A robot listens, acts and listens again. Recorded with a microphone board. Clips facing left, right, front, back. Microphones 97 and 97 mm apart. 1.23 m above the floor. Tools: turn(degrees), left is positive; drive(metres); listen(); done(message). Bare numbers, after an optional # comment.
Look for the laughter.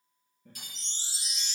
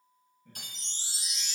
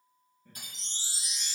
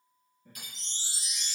# The laughter: 100° left.
turn(100)
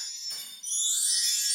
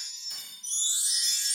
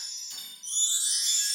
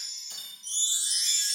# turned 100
listen()
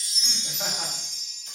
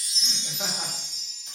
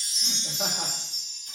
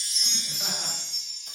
listen()
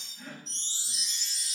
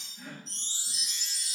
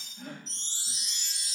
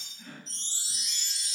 # The laughter is now 15° right.
turn(-15)
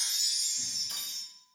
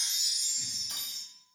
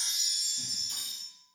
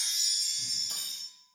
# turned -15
listen()
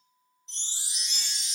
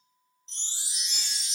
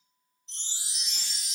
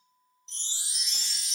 listen()
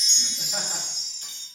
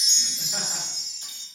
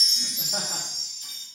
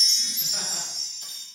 done("I heard laughter from this way, but can't make it out now.")